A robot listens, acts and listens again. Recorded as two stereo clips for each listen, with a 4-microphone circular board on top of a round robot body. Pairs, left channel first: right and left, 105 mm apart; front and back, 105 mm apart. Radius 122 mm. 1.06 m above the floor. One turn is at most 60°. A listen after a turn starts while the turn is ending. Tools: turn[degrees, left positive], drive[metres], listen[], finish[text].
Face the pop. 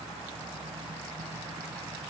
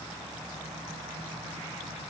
Action: listen[]
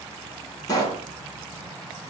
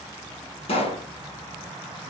Thought: The pop: 30° right.
Action: turn[-30]
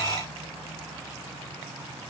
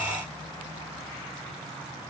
Action: finish[I heard a pop from this way, but can't make it out now.]